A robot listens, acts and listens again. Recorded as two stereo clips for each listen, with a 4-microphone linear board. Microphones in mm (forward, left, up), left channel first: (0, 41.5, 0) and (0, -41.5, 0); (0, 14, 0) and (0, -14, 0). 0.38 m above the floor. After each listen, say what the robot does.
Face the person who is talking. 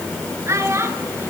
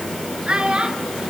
Turn 35° right.
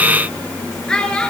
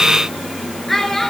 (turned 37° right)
Turn 10° left.
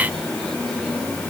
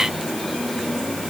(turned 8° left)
Keep listening.
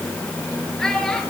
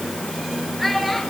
Found it: a child speaking, straight ahead.